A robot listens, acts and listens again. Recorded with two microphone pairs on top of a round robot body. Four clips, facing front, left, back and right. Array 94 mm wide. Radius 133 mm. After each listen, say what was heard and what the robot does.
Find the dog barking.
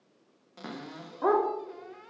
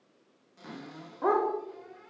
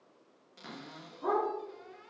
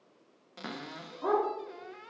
The dog barking: 40° left. Turn 40° left.
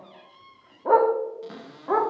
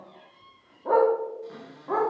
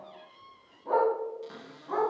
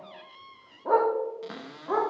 The dog barking is now 10° left. Turn 10° left.
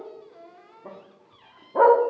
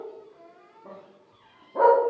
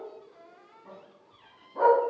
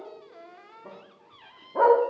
Found it: a dog barking, straight ahead.